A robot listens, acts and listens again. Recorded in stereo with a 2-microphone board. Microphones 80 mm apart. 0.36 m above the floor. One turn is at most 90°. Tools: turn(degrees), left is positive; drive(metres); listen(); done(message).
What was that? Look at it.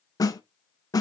turn(degrees=50)
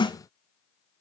turn(degrees=80)
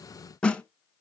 turn(degrees=10)
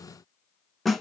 done("Facing the snare drum.")